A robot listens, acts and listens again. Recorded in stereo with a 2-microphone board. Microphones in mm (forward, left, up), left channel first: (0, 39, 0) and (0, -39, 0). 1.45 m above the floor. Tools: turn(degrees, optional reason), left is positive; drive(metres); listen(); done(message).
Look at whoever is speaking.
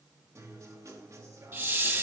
listen()
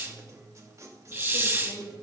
turn(degrees=65, reason="The woman speaking: about 65° left or 115° left.")
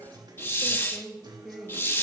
done("Facing the woman speaking, 2 to 4 m away.")